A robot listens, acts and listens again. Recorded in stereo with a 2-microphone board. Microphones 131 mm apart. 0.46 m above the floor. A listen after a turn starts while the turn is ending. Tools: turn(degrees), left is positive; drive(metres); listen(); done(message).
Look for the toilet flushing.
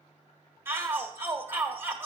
listen()
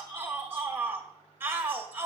listen()
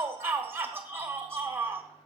done("I can't make out a toilet flushing to turn to.")